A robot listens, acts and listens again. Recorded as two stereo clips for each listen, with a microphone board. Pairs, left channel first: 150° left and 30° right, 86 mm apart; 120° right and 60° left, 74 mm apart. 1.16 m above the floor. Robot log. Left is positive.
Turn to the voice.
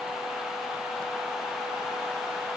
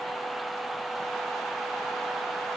cmd idle
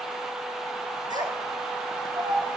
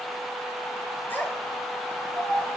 note: The child speaking: 55° right.
cmd yaw -55
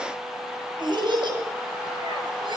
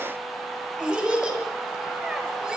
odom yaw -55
note: The child speaking is now 15° right.
cmd yaw -15
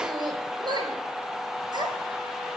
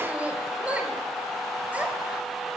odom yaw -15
note: The child speaking is now 10° right.
cmd yaw -10
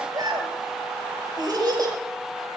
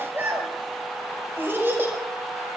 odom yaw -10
end: Facing the child speaking, over 4 m away.